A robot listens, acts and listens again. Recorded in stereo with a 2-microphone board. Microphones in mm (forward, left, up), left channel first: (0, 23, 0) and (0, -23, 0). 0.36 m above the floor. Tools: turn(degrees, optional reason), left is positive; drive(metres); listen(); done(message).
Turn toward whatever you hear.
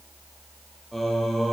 turn(degrees=30)
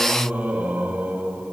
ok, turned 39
turn(degrees=-30, reason="So it is at 30° right.")
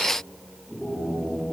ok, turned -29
done("Facing the singing, over 4 m away.")